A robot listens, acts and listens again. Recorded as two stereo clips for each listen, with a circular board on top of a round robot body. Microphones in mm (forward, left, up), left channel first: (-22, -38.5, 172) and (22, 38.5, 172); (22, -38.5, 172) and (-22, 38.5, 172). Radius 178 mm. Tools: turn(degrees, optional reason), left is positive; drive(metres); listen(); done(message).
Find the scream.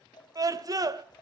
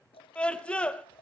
turn(degrees=15, reason="The scream: 15° left.")
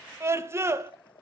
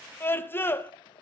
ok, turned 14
done("Facing the scream, 2 to 4 m away.")